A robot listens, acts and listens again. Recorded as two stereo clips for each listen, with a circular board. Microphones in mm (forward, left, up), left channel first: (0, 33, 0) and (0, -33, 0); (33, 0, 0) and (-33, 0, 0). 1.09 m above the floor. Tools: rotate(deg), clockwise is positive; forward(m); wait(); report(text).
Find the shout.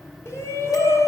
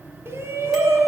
rotate(-130)
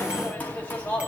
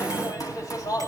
rotate(-25)
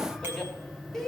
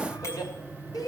rotate(-10)
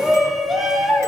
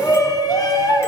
report("Found it: a shout, straight ahead, 2 to 4 m away.")